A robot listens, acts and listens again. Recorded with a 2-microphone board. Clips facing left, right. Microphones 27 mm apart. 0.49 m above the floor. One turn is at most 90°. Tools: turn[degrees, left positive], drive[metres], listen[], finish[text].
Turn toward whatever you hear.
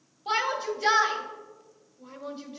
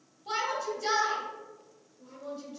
Thought: The shout: about 50° left or 130° left.
Action: turn[50]
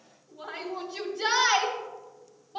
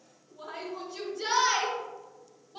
Thought: So it is at 20° left.
Action: turn[20]
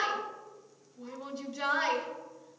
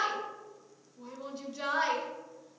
Action: finish[Facing the shout.]